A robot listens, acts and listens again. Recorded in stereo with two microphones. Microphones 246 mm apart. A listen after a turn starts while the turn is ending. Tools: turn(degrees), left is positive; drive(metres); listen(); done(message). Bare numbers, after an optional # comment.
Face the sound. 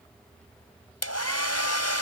turn(90)
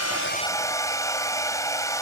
# So it is at 15° left.
turn(15)
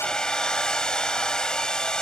done("Found it: a hair dryer, straight ahead.")